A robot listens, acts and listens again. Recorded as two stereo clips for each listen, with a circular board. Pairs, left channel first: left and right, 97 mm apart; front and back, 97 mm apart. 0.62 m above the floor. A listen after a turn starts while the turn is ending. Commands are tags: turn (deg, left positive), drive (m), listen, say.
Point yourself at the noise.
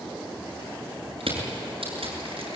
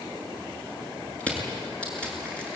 <turn deg="-80"/>
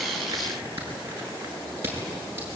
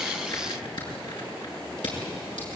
<turn deg="-25"/>
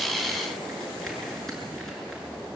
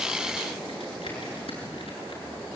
<listen/>
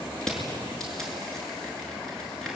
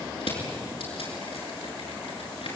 <say>Found it: crushing, straight ahead.</say>